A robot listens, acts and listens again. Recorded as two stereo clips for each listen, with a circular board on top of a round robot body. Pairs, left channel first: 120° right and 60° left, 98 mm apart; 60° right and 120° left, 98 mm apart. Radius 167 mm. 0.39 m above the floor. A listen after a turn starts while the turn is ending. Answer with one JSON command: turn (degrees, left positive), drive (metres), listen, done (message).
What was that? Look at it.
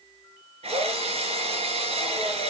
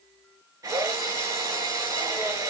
{"turn": 65}
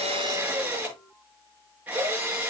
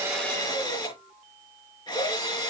{"turn": -15}
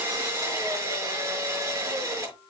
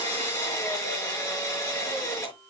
{"done": "Facing the drill."}